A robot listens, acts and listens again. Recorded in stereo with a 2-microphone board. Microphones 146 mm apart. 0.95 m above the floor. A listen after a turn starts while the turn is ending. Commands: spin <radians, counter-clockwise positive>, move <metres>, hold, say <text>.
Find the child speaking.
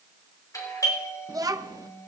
spin -0.44
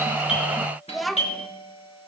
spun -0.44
say Facing the child speaking.